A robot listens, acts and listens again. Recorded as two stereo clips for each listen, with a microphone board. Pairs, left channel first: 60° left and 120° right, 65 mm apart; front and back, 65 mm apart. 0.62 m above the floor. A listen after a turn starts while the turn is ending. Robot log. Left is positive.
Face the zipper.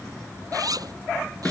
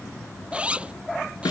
note: The zipper: 110° right.
cmd yaw -110
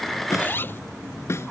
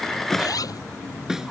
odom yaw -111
end: Facing the zipper.